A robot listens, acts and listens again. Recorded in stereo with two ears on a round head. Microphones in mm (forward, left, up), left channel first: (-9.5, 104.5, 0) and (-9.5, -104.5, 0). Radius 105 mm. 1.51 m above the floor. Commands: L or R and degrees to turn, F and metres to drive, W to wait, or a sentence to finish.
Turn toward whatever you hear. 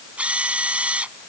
R30
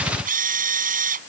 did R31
R145
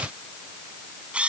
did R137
Facing the drill.